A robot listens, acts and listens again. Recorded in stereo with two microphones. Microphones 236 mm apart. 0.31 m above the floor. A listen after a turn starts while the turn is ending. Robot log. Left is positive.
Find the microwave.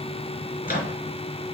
note: The microwave: about 45° left or 135° left.
cmd yaw +45
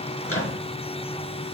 note: So it is at 85° left.
cmd yaw +85
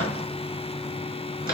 note: The microwave is now 40° left.
cmd yaw +40
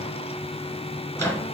note: The microwave is now 10° left.
cmd yaw +10
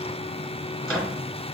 end: Found it: a microwave, straight ahead.